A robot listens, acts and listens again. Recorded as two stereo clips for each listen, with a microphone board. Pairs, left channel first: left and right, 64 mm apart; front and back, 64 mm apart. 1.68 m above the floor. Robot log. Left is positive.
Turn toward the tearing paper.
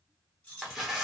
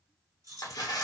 end: Facing the tearing paper, under 1 m away.